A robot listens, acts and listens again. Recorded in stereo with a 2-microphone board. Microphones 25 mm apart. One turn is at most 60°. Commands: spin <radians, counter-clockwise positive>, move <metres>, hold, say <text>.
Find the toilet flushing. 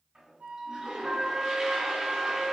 spin -0.61
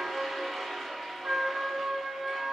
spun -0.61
say Facing the toilet flushing.